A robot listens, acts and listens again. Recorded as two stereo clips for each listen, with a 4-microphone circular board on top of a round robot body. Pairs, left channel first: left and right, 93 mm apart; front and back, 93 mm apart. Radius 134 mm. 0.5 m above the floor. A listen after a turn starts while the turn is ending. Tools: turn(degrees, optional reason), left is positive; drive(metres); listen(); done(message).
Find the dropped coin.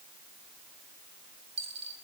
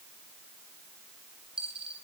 turn(degrees=-100, reason="The dropped coin: 100° right.")
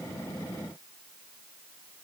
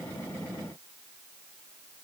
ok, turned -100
done("I heard a dropped coin from this way, but can't make it out now.")